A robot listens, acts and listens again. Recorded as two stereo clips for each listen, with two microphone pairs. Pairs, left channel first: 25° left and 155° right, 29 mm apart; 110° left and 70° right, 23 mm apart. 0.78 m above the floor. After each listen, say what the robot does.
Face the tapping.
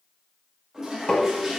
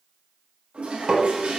Turn 35° right.
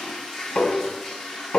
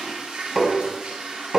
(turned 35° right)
Found it: tapping, straight ahead, 1 to 2 m away.